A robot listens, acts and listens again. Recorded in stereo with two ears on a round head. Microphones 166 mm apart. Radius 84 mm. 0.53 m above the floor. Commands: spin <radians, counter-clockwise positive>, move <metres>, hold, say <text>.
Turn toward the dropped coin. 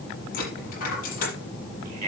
spin 0.87
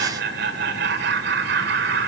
hold
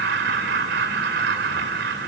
say I heard a dropped coin, but can't make it out now. It was about straight ahead or 80° left.